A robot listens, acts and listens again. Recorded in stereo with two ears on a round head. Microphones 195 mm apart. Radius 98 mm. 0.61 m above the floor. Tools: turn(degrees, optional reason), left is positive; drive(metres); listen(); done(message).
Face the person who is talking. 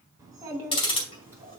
turn(degrees=-30)
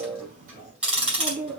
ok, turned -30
turn(degrees=-145, reason="So it is at 145° right.")
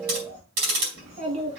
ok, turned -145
turn(degrees=-30, reason="The child speaking is now 30° right.")
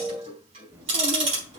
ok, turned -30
turn(degrees=-15, reason="The child speaking is now 15° right.")
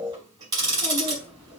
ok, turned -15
done("Found it: a child speaking, straight ahead, over 4 m away.")